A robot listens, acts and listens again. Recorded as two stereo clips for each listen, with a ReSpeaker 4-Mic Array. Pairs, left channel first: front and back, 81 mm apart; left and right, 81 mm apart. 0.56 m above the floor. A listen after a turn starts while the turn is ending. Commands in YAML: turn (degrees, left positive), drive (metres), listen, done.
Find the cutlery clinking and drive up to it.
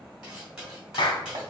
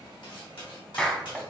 turn: 95
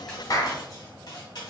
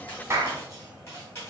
turn: 30
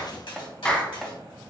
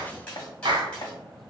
turn: 10
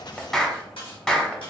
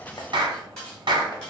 drive: 1.0
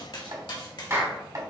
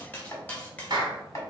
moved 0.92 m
turn: 20
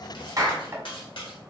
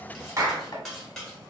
drive: 1.0
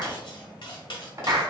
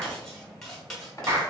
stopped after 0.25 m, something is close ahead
done: "I am next to the cutlery clinking."